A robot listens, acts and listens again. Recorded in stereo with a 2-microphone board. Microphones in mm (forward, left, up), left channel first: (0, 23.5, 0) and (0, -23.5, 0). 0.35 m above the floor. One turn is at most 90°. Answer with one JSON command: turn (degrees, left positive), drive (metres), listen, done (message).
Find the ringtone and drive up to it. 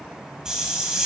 {"listen": true}
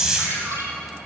{"turn": -70}
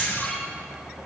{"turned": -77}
{"listen": true}
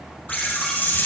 {"listen": true}
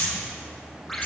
{"drive": 1.0}
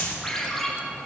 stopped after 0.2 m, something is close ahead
{"turn": 10}
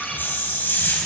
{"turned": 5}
{"done": "Blocked. The ringtone is further on, straight ahead."}